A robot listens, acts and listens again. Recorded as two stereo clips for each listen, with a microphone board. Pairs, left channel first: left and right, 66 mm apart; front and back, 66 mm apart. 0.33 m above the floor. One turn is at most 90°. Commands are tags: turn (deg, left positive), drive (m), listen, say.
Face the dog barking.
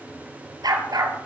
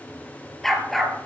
<turn deg="-90"/>
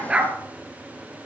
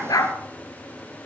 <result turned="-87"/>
<turn deg="-20"/>
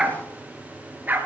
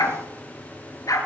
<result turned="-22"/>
<turn deg="-30"/>
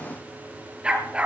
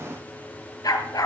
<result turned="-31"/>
<turn deg="-20"/>
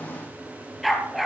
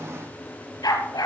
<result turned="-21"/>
<say>Found it: a dog barking, straight ahead, 2 to 4 m away.</say>